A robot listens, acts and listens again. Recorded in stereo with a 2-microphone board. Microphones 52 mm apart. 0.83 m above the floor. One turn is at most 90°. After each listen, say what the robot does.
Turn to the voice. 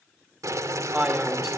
Turn 20° right.
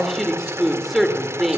Found it: a man speaking, straight ahead.